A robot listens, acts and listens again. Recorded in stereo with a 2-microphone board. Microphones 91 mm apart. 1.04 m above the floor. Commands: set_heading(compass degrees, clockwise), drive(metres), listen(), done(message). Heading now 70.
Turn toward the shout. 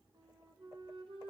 listen()
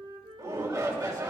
set_heading(115)
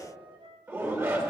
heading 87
set_heading(117)
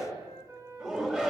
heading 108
set_heading(118)
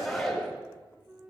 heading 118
done("Facing the shout.")